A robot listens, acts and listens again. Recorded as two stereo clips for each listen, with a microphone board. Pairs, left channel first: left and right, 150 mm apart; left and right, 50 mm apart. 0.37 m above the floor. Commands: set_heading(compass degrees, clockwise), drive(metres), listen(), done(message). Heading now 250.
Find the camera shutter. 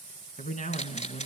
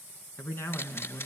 set_heading(200)
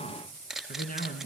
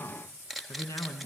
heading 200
done("Facing the camera shutter, 1 to 2 m away.")